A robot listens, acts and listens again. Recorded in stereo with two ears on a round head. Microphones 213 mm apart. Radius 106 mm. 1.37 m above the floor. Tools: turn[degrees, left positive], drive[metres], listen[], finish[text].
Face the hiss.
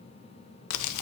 Action: listen[]
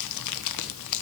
Action: listen[]
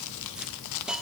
Action: turn[-30]
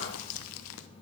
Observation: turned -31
Action: listen[]
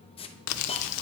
Thought: So it is at 25° left.
Action: turn[25]
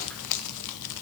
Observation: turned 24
Action: listen[]
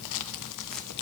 Action: listen[]
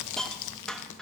Action: finish[Facing the hiss, under 1 m away.]